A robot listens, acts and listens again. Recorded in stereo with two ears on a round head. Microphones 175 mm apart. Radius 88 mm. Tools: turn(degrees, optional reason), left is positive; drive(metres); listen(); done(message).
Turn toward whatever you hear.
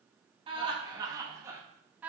turn(degrees=-30)
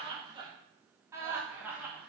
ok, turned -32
turn(degrees=-30)
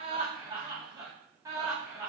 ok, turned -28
turn(degrees=-15, reason="The laughter: about 15° right or 165° right.")
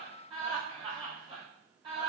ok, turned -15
turn(degrees=-150, reason="So it is at 150° right.")
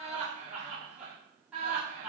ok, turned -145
done("Facing the laughter.")